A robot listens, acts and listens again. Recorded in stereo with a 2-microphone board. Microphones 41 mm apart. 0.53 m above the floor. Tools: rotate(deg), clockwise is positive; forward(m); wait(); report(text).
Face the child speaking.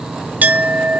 wait()
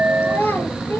rotate(-90)
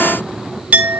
wait()
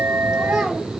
wait()
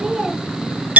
report("I heard a child speaking from this way, but can't make it out now.")